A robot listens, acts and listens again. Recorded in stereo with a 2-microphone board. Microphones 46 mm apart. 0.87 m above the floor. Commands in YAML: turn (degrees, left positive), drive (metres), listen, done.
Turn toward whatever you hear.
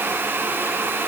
listen: true
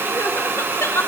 turn: 70
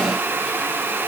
listen: true
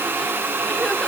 listen: true
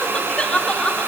turn: 20
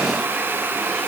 listen: true
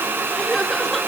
done: "Found it: crying, straight ahead, under 1 m away."